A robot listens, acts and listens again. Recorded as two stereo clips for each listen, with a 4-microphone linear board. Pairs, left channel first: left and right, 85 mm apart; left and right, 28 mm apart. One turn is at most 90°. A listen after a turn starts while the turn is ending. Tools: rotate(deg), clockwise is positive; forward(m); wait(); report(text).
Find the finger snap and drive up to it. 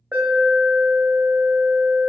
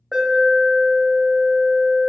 wait()
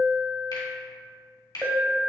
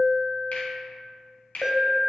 rotate(-65)
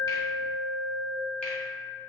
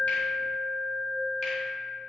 wait()
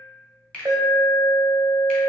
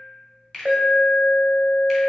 rotate(-15)
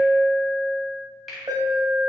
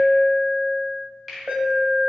forward(1.0)
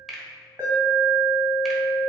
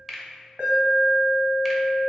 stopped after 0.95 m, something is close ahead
report("I am next to the finger snap.")